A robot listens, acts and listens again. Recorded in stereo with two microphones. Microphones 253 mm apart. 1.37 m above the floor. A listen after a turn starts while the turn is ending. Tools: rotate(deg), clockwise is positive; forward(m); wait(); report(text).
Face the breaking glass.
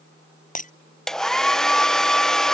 rotate(-30)
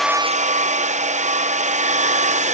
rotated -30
wait()
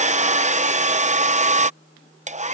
report("I heard breaking glass, but can't make it out now. It was about straight ahead or 120° left.")